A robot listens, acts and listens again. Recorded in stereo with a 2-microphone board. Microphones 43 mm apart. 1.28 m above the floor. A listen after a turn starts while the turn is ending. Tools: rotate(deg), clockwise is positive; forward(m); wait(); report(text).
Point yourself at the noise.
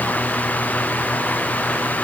wait()
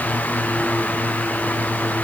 wait()
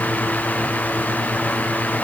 report("I can't make out anything.")